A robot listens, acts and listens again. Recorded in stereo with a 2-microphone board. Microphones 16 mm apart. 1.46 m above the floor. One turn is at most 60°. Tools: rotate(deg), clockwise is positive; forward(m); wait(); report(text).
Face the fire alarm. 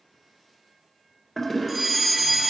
rotate(30)
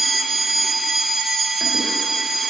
rotate(60)
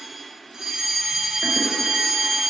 rotate(60)
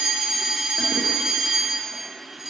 rotate(35)
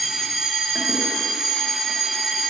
report("Facing the fire alarm, 2 to 4 m away.")